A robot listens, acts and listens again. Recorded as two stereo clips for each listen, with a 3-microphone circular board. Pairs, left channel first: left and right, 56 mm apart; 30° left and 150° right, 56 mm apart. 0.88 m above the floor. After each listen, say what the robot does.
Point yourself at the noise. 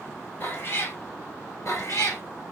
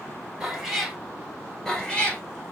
Turn 100° left.
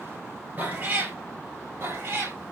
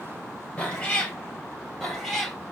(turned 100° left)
Turn 55° right.
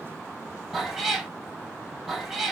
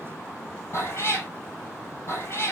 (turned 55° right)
Turn 10° right.
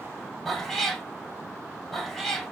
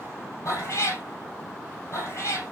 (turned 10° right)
Found it: a cat meowing, straight ahead.